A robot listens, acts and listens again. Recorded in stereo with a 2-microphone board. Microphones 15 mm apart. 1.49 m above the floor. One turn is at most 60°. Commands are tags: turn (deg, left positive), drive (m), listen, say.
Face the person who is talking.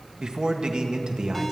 <turn deg="-60"/>
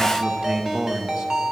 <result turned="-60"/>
<turn deg="-60"/>
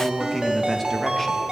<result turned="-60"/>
<say>Facing the man speaking, 1 to 2 m away.</say>